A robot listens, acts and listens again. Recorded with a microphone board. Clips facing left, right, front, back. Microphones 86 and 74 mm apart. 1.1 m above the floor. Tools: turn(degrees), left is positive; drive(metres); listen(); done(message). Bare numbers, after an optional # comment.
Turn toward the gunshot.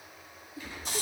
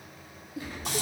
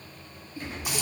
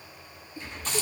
# The gunshot: 40° right.
turn(-40)
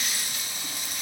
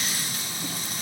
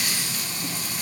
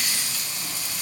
done("Facing where the gunshot came from. I can't hear it now.")